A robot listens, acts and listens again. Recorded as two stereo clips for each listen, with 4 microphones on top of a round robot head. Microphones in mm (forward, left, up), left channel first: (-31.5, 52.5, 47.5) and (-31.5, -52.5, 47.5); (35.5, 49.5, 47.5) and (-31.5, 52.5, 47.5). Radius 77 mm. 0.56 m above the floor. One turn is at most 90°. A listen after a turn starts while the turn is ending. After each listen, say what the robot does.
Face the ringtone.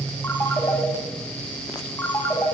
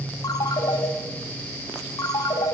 Turn 15° left.
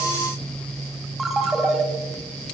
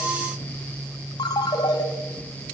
Found it: a ringtone, straight ahead.